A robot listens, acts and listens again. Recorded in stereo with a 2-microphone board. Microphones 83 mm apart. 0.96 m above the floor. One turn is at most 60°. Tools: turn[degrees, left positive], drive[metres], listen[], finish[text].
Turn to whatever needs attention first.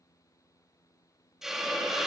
Action: listen[]
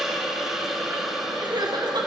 Thought: The crying: about 60° right or 120° right.
Action: turn[-60]
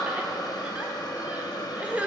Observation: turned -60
Thought: So it is at 20° right.
Action: turn[-20]
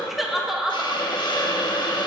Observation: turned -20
Action: finish[Facing the crying, 1 to 2 m away.]